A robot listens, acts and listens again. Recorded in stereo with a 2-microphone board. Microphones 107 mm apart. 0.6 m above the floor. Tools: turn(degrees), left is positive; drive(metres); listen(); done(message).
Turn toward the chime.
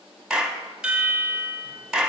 turn(degrees=-30)
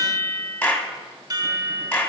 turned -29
turn(degrees=-140)
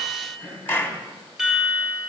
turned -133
done("Facing the chime, 1 to 2 m away.")